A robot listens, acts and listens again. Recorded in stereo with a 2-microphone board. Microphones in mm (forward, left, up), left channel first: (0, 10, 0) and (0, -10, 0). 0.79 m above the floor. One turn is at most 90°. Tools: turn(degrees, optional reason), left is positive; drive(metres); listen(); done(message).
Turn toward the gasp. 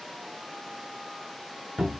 listen()
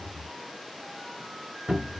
listen()
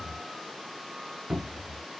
done("I can't make out a gasp, only a cupboard door.")